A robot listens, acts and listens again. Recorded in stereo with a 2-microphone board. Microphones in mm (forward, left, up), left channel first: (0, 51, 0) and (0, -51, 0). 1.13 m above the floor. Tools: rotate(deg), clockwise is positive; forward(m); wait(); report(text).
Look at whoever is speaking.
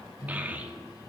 rotate(15)
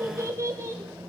rotate(150)
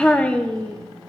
rotate(-15)
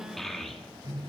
report("Found it: a child speaking, straight ahead, under 1 m away.")